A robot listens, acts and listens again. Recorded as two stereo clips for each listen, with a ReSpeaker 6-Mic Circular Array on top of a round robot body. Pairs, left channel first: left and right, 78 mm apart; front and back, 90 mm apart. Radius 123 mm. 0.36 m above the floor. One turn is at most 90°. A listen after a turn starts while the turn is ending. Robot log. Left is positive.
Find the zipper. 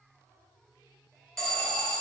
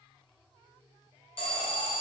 cmd idle
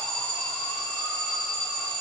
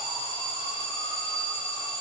cmd idle
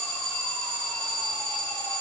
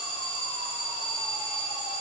end: I can't make out a zipper, only an alarm.